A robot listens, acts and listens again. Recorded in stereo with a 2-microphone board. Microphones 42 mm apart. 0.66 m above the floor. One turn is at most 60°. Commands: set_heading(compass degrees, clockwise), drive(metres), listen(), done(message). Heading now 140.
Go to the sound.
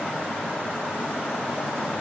listen()
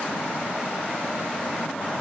listen()
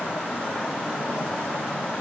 done("I can't make out anything to turn to.")